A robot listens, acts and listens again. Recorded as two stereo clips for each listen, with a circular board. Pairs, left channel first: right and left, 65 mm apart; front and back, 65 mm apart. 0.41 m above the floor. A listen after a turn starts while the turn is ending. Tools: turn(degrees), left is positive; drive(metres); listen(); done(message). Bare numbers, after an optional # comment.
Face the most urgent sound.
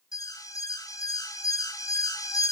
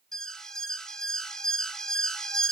# The alarm: 80° right.
turn(-80)
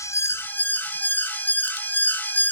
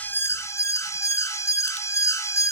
# The alarm is now 30° right.
turn(-30)
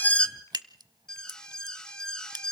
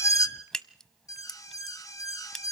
# The alarm is now 15° right.
turn(-15)
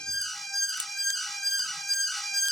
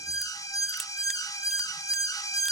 done("Facing the alarm, 1 to 2 m away.")